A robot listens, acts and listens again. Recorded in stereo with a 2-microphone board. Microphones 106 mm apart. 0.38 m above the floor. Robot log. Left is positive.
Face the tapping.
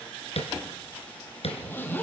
cmd yaw +90
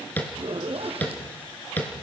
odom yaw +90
note: So it is at 15° left.
cmd yaw +15
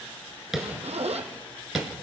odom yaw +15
end: Facing the tapping, 2 to 4 m away.